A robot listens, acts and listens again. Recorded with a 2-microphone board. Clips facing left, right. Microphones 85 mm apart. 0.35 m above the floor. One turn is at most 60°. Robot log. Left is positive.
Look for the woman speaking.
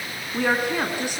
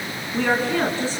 note: The woman speaking: about 15° left or 165° left.
cmd yaw +15
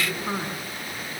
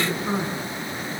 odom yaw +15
cmd yaw +30
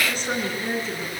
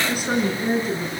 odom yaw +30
end: Found it: a woman speaking, straight ahead, over 4 m away.